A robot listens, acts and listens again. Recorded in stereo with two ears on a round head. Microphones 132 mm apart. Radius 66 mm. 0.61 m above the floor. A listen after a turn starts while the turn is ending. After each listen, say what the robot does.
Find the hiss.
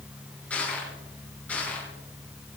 Keep listening.
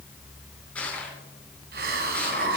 Turn 75° right.
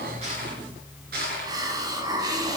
Turn 25° right.
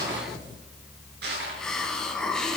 Facing the hiss, 2 to 4 m away.